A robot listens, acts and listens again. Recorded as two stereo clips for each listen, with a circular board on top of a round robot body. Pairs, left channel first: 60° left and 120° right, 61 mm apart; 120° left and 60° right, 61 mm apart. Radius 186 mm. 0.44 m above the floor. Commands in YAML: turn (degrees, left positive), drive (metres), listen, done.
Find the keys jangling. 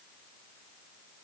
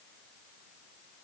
listen: true
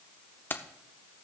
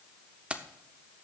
done: "Found it: keys jangling, straight ahead."